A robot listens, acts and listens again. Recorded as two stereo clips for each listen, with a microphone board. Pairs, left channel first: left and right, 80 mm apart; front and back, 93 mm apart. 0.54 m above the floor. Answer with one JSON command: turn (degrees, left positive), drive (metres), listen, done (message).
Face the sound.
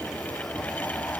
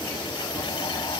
{"listen": true}
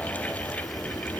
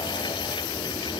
{"listen": true}
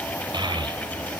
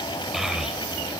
{"turn": -95}
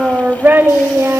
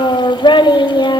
{"turn": -35}
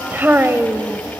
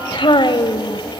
{"turn": -30}
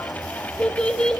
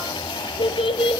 {"turn": 10}
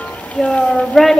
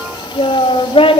{"done": "Facing the child speaking."}